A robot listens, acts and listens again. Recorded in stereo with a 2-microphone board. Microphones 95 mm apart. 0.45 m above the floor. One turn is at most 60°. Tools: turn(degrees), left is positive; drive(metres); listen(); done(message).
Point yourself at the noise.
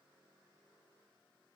listen()
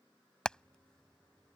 turn(degrees=30)
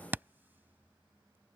turn(degrees=-20)
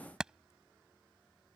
turn(degrees=-10)
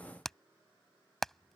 done("Found it: hammering, straight ahead.")